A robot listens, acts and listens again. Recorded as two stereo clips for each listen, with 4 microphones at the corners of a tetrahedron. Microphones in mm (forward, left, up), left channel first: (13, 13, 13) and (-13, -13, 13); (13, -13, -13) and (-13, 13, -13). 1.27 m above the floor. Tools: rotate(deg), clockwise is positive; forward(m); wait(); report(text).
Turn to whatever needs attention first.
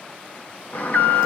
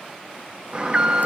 rotate(-75)
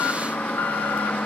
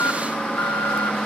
rotate(-10)
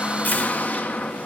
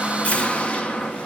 report("Facing the alarm, 1 to 2 m away.")